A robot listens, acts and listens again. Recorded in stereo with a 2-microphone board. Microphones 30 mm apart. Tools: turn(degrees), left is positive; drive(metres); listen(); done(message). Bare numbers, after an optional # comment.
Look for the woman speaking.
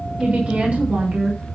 # The woman speaking: about 55° right or 125° right.
turn(-55)
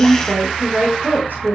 # So it is at 80° right.
turn(-80)
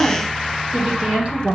# The woman speaking is now 45° right.
turn(-45)
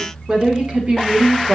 # The woman speaking is now 40° right.
turn(-40)
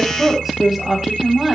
# The woman speaking is now 15° right.
turn(-15)
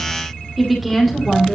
done("Found it: a woman speaking, straight ahead, over 4 m away.")